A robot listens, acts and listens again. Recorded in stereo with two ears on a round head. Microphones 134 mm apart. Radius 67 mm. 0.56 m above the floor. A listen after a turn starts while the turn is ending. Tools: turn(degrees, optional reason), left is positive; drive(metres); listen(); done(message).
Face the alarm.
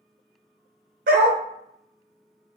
listen()
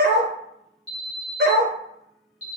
turn(degrees=50, reason="The alarm: about 50° left or 130° left.")
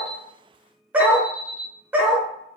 done("Found it: an alarm, straight ahead.")